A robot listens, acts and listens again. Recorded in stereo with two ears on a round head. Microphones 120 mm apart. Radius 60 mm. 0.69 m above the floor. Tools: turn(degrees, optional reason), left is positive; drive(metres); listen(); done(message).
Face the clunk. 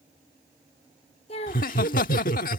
listen()
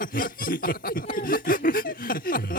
listen()
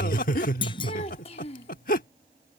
turn(degrees=40, reason="The clunk: about 40° left or 140° left.")
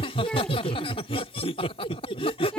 listen()
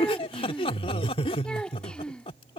done("I heard a clunk, but can't make it out now. It was about straight ahead or 100° left.")